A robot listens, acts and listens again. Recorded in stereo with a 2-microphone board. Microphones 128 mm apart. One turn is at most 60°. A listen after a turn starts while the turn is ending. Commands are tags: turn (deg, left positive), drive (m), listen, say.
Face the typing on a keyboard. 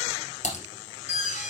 <turn deg="60"/>
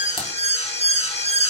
<listen/>
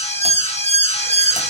<listen/>
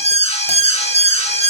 <say>I heard typing on a keyboard, but can't make it out now. It was about 15° left or 45° left.</say>